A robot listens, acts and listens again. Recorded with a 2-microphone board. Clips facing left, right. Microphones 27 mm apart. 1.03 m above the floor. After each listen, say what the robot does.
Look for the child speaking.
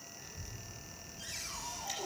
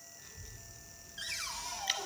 Turn 30° right.
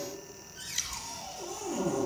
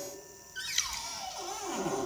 Turn 135° right.
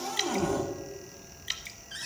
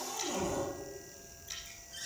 Found it: a child speaking, straight ahead.